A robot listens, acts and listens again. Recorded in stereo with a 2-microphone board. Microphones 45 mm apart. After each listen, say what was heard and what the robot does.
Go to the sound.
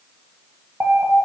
The alarm: about 55° right or 125° right. Turn 55° right.
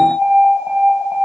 So it is at 65° right. Turn 65° right.
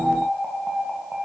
The alarm is now 20° right. Turn 20° right.
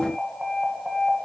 Drive 1.0 m forward.
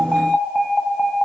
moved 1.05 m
Drive 1.0 m forward.
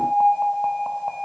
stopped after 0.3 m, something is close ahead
Arrived at the alarm, straight ahead.